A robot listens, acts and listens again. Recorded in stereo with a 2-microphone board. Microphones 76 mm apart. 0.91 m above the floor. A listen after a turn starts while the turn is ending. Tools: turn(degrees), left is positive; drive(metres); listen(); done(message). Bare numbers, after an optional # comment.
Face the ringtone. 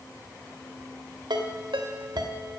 turn(-90)
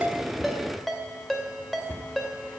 done("Found it: a ringtone, straight ahead, 2 to 4 m away.")